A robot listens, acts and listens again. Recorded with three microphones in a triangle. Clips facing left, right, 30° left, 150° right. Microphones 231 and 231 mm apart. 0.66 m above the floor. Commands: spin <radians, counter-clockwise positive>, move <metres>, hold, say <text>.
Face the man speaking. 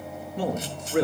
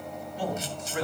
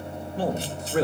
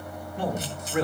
spin 1.40
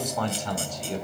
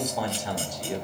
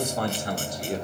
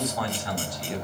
spin -0.26
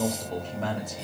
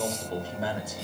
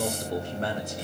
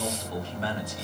spin -0.17
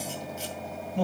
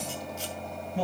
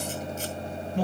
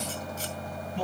say Found it: a man speaking, straight ahead.